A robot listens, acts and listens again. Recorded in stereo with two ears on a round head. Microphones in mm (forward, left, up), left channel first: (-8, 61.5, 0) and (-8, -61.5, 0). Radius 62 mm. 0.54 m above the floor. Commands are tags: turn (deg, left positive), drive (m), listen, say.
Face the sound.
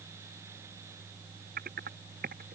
<turn deg="-90"/>
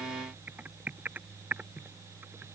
<turn deg="-10"/>
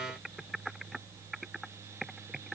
<say>Facing the typing on a keyboard.</say>